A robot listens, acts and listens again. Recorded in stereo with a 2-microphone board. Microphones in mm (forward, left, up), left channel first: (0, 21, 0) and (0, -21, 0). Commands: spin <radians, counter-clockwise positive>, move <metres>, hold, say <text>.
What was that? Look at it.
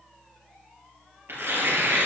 spin -1.13
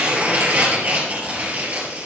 spin -0.79
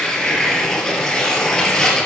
spin 0.26
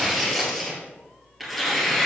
say Found it: tearing paper, straight ahead.